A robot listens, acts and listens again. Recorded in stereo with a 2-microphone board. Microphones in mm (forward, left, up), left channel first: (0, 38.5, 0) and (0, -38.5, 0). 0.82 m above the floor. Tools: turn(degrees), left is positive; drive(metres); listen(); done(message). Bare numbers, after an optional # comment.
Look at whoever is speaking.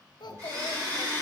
# The child speaking: about 70° left or 110° left.
turn(70)
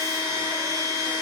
listen()
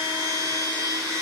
listen()
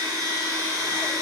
done("I heard a child speaking, but can't make it out now. It was about straight ahead or 40° left.")